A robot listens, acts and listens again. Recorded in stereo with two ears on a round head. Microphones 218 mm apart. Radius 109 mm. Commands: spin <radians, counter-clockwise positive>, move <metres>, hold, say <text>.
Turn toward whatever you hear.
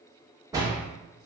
spin -0.52
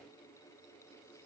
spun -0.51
hold
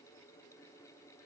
say I heard a door slam, but can't make it out now. It was about 15° left or 135° right.